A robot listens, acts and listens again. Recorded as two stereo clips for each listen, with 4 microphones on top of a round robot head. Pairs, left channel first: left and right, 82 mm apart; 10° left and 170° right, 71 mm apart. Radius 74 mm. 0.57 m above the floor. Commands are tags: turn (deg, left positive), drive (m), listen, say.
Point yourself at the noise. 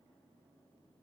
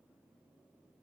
<listen/>
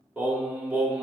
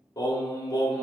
<turn deg="-20"/>
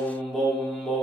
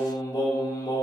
<turn deg="10"/>
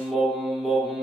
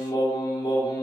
<say>Found it: singing, straight ahead.</say>